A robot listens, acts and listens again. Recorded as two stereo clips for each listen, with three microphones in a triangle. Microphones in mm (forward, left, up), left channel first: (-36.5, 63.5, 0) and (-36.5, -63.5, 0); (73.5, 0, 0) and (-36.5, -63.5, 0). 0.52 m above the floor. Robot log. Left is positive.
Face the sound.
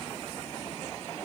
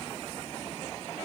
cmd idle
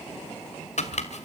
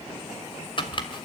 note: The chopping: 75° left.
cmd yaw +75
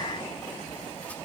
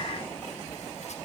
cmd idle
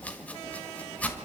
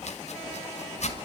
note: The chopping is now 10° left.
cmd yaw +10
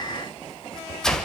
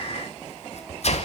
end: Found it: chopping, straight ahead, 1 to 2 m away.